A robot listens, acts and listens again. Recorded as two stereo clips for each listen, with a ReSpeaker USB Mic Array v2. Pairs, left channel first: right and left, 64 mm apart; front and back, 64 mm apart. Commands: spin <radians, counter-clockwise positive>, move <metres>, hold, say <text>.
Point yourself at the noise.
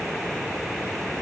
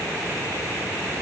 hold
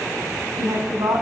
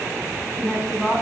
spin 1.66
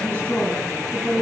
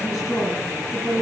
spin -0.52
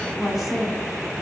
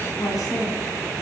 say Found it: a woman speaking, straight ahead, over 4 m away.